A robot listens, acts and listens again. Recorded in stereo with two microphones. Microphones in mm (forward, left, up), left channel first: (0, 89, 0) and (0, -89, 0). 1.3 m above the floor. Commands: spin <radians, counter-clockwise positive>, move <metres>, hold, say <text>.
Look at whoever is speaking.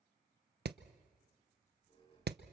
hold
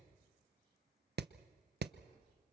hold
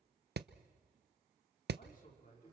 spin 0.96
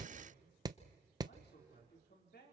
spin 1.31
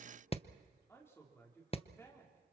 spin 0.26
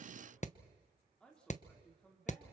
say Found it: a man speaking, straight ahead.